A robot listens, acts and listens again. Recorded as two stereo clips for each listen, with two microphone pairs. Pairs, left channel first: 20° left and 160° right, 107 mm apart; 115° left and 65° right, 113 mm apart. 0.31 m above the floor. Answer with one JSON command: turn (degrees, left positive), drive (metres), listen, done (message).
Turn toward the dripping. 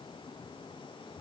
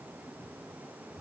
{"listen": true}
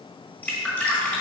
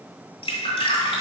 {"turn": 90}
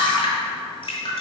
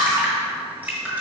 {"done": "Found it: dripping, straight ahead."}